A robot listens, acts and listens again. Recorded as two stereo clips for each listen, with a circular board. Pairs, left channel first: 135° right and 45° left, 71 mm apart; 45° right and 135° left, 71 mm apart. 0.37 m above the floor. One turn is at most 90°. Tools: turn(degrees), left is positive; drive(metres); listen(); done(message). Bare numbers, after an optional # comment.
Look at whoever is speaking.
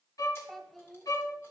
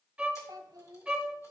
# The child speaking: 135° left.
turn(90)
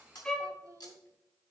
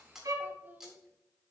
# Nothing new. It was at 45° left.
turn(45)
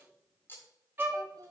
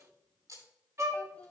# The child speaking is now 25° left.
turn(25)
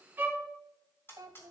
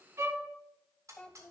# The child speaking is now 30° left.
turn(30)
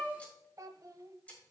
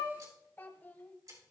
# The child speaking is now 15° left.
turn(15)
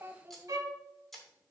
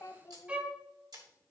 done("Facing the child speaking, 1 to 2 m away.")